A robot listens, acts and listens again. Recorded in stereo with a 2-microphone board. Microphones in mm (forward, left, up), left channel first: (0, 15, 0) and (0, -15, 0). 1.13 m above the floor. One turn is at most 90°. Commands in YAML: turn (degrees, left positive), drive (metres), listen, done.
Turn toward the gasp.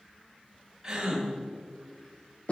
turn: -30
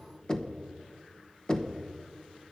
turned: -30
listen: true
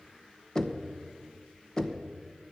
done: "I heard a gasp, but can't make it out now. It was about 15° left or 135° right."